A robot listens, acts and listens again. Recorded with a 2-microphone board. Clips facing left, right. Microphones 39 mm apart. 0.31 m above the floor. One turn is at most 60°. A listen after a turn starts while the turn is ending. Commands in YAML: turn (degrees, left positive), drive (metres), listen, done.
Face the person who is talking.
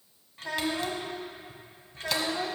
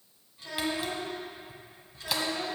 turn: 50
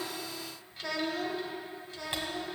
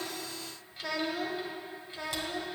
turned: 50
turn: -35
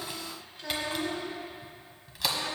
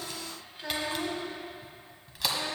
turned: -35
turn: -30
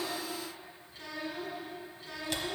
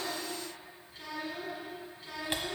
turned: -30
done: "Found it: a child speaking, straight ahead, 1 to 2 m away."